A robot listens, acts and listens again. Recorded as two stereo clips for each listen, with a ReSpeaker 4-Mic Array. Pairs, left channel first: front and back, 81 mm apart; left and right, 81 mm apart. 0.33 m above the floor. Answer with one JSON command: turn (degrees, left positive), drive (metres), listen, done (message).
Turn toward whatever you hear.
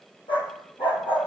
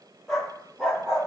{"done": "Facing the dog barking."}